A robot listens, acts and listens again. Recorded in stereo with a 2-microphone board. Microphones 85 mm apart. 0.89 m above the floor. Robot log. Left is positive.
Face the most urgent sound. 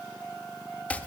cmd idle
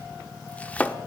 cmd idle
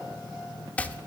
end: I can't make out anything urgent to turn to.